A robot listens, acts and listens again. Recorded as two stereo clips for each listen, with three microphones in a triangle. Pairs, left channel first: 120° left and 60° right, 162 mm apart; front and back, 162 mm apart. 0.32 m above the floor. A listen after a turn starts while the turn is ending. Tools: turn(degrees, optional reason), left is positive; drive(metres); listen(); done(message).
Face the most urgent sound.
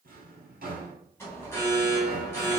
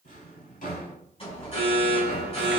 turn(degrees=45, reason="The alarm: 45° left.")
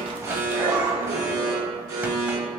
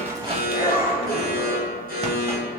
turn(degrees=10, reason="The alarm is now 10° left.")
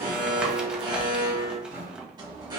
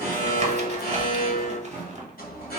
done("Found it: an alarm, straight ahead.")